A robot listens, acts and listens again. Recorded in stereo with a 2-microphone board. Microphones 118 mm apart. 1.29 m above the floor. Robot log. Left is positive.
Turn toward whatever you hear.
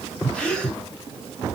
cmd yaw +30
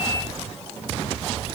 cmd idle
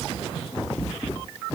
end: I heard a gasp, but can't make it out now. It was about 20° right or 140° left.